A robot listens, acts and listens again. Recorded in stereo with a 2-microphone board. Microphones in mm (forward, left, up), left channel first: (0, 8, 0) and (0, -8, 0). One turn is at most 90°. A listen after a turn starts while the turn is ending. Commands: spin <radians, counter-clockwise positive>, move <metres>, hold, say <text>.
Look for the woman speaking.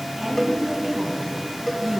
spin -0.52
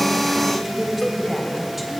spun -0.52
say Facing the woman speaking, 2 to 4 m away.